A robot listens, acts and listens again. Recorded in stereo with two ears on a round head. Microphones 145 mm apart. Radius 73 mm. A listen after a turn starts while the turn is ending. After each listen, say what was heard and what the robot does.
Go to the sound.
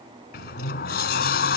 The sliding door: about 60° left or 120° left. Turn 60° left.
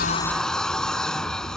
Drive 1.0 m forward.
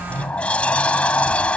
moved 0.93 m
Drive 1.0 m forward.
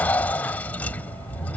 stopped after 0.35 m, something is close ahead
The sliding door is now 10° left. Turn 10° left.
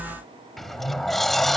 Arrived at the sliding door, straight ahead.